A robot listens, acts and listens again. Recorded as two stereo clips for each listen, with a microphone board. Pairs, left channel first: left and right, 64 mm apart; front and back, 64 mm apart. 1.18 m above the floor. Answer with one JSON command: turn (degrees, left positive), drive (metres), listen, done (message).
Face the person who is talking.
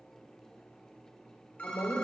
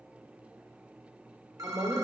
{"turn": 125}
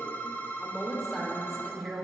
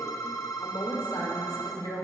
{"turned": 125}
{"done": "Facing the woman speaking."}